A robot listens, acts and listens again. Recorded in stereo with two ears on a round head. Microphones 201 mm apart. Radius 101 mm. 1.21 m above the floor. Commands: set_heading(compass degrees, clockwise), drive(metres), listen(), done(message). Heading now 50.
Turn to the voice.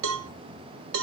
listen()
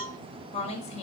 set_heading(20)
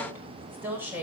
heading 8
set_heading(18)
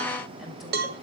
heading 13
listen()
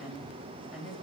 done("Found it: a woman speaking, straight ahead.")